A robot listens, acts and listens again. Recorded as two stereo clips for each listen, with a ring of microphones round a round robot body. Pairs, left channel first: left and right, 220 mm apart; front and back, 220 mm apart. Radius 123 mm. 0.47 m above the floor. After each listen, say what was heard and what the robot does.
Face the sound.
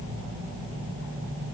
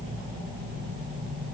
Keep listening.
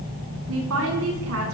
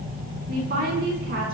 The woman speaking: 125° right. Turn 125° right.
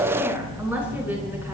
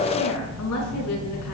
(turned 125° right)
The woman speaking is now 10° right. Turn 10° right.
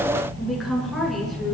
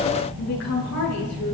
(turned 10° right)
Found it: a woman speaking, straight ahead.